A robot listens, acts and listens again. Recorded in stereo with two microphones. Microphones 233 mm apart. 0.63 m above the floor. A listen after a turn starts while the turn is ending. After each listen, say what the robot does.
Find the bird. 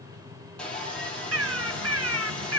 Turn 70° right.
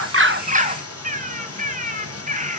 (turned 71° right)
Turn 35° right.
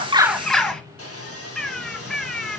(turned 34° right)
Facing the bird.